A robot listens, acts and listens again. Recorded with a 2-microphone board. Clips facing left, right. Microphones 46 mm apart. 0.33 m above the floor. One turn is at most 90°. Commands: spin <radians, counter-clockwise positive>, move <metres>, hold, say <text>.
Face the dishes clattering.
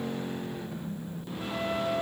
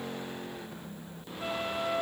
hold
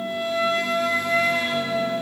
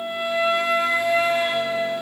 hold
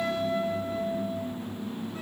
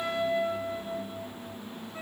say I can't make out dishes clattering to turn to.